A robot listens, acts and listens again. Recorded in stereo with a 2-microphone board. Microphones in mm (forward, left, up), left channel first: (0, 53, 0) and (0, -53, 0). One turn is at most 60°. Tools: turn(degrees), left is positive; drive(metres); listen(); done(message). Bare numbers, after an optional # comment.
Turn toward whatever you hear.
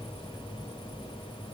listen()
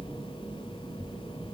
listen()
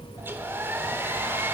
# The hair dryer: about 20° right or 160° right.
turn(-20)
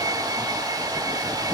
# So it is at 135° right.
turn(-60)
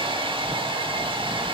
# The hair dryer is now 75° right.
turn(-60)
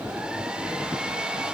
# The hair dryer is now 10° right.
turn(-10)
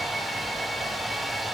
done("Facing the hair dryer, 1 to 2 m away.")